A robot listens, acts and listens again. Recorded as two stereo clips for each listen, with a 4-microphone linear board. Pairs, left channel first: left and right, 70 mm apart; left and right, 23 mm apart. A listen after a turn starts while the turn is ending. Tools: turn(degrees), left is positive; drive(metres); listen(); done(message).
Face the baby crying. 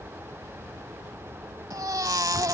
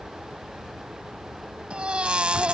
turn(degrees=-60)
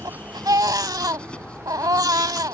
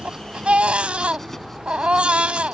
turn(degrees=-65)
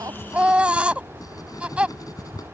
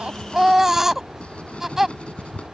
turn(degrees=-15)
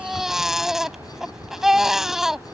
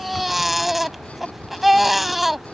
done("Found it: a baby crying, straight ahead.")